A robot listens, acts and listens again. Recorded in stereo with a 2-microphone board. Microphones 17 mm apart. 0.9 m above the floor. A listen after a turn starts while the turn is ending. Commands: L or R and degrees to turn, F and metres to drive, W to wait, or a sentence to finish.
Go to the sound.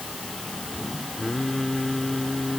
L30
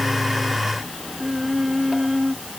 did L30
R20
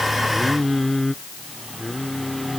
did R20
F1.0
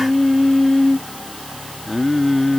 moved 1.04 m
F1.0
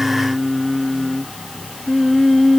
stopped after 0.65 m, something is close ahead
Arrived at the singing, straight ahead.